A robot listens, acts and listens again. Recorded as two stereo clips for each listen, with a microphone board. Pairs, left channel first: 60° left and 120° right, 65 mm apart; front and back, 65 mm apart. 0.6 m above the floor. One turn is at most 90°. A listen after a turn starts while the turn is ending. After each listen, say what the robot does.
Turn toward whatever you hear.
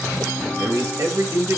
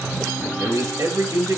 Turn 90° right.
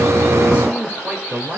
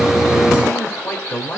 Turn 65° right.
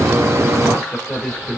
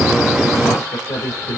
Turn 30° right.
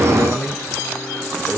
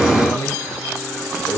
Turn 20° right.
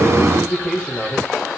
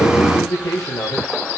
Found it: a man speaking, straight ahead, 2 to 4 m away.